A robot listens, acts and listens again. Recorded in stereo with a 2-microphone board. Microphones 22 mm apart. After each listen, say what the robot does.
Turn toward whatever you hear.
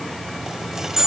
Turn 25° right.
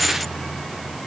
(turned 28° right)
Keep listening.
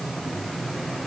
I heard a dropped coin, but can't make it out now. It was about 5° left or 125° right.